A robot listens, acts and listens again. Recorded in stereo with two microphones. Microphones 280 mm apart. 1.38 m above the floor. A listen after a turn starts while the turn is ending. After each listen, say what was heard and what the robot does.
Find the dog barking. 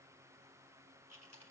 Keep listening.
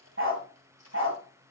The dog barking: about 50° right or 130° right. Turn 50° right.
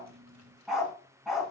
Facing the dog barking, over 4 m away.